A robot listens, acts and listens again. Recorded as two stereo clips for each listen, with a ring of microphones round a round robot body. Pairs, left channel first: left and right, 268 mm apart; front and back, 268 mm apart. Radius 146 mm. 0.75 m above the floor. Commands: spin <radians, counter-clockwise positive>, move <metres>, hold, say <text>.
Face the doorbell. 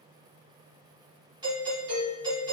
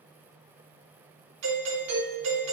spin -2.88
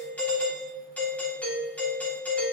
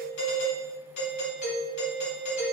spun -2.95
say Found it: a doorbell, straight ahead, 2 to 4 m away.